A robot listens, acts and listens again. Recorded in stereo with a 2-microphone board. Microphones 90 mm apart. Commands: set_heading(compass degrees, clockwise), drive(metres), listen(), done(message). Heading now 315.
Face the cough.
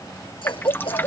set_heading(225)
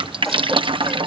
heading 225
listen()
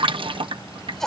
done("Facing the cough.")